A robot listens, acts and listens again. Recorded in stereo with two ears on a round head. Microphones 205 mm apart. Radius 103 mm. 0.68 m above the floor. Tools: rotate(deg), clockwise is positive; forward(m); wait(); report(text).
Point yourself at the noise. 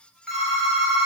rotate(-30)
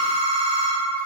rotate(-150)
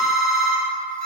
rotate(55)
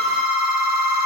rotate(20)
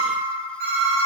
report("Found it: a phone ringing, straight ahead, 1 to 2 m away.")